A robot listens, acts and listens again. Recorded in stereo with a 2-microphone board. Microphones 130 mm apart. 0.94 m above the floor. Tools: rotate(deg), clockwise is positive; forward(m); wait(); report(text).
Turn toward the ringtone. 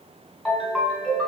rotate(30)
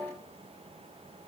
wait()
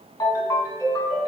rotate(-25)
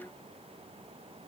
wait()
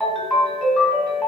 report("Found it: a ringtone, straight ahead.")